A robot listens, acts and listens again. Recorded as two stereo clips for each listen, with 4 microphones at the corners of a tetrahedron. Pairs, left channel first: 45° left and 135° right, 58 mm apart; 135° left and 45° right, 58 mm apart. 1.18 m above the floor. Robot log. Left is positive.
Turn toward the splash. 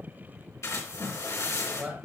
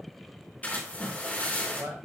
note: The splash: 70° left.
cmd yaw +70
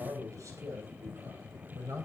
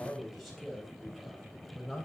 end: Facing where the splash came from. I can't hear it now.